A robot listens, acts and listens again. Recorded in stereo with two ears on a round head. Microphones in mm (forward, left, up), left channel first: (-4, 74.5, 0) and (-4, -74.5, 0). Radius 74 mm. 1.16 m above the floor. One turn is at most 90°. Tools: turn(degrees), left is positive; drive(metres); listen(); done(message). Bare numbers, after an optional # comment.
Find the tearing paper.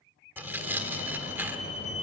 turn(-30)
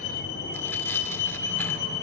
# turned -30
listen()
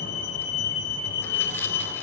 listen()
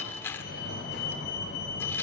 # So it is at 15° left.
turn(15)
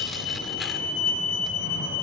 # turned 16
listen()
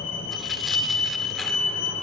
listen()
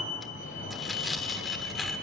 done("Facing the tearing paper.")